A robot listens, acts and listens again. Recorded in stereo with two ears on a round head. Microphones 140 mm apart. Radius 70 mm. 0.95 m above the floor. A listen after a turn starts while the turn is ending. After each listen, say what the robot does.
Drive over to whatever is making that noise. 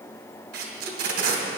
Turn 65° right.
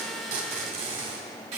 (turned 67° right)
Turn 40° right.
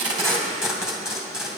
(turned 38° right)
Drive 1.0 m forward.
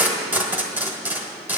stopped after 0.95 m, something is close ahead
Turn 10° right.
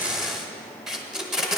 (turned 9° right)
I am next to the tape being pulled.